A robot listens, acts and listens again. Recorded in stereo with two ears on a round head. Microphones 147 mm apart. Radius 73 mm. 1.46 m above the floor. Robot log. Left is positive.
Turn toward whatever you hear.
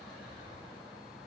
cmd idle
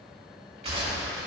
note: The gunshot: about 40° right or 140° right.
cmd yaw -40
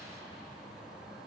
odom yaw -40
cmd idle
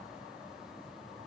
end: I heard a gunshot, but can't make it out now. It was about straight ahead or 100° right.